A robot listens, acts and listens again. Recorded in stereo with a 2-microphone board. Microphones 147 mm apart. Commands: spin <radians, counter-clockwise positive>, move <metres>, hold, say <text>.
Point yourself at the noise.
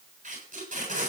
spin -1.13
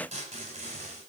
spin -0.87
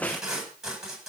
say Facing the tape being pulled, over 4 m away.